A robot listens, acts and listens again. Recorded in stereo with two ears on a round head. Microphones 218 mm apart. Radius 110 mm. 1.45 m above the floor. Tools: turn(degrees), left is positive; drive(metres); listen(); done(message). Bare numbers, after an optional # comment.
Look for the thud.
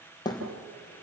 # The thud: about 20° left or 160° left.
turn(20)
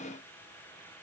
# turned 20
listen()
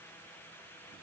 done("I heard a thud, but can't make it out now. It was about straight ahead or 140° left.")